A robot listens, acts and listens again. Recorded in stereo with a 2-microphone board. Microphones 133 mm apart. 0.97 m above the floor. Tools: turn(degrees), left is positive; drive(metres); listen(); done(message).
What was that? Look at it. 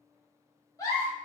turn(degrees=25)
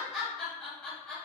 turn(degrees=10)
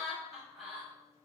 done("Facing the giggle, 1 to 2 m away.")